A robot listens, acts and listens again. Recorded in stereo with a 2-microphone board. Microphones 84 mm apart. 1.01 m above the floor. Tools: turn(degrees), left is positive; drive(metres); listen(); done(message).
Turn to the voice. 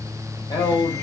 turn(degrees=70)
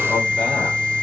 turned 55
listen()
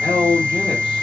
turn(degrees=10)
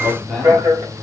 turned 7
done("Facing the man speaking, 2 to 4 m away.")